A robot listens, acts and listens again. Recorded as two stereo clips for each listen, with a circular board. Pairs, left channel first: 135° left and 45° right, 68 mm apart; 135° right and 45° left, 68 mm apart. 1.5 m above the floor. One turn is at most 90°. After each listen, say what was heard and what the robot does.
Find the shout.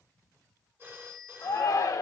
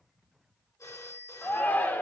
The shout: 165° left. Turn 90° left.
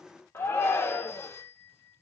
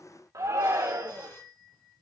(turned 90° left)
The shout is now 85° left. Turn 85° left.
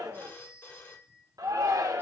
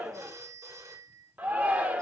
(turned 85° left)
The shout is now 20° right. Turn 20° right.
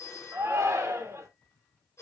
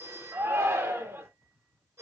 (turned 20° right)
Facing the shout, 1 to 2 m away.